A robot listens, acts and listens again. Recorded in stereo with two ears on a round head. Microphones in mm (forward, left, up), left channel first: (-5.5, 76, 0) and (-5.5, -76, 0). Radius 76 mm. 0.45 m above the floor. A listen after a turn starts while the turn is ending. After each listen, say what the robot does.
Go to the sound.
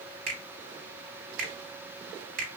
Turn 55° right.
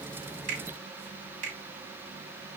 Turn 55° right.
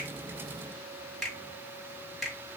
Drive 1.0 m forward.
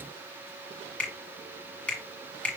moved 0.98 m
Turn 10° left.
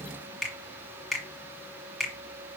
Drive 1.0 m forward.
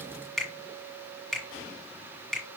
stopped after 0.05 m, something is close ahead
I am next to the finger snap.